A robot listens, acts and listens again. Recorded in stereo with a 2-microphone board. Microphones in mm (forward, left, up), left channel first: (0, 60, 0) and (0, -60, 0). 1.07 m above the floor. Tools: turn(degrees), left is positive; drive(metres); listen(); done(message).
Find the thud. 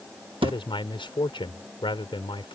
turn(degrees=-50)
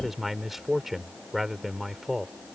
listen()
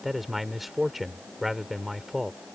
done("I heard a thud, but can't make it out now. It was about straight ahead or 80° right.")